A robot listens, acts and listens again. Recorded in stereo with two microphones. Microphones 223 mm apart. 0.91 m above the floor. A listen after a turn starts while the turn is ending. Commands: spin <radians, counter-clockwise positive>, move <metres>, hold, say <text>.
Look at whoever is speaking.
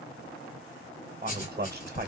spin -0.79
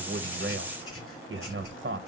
spin -1.40
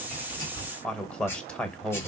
say Facing the man speaking.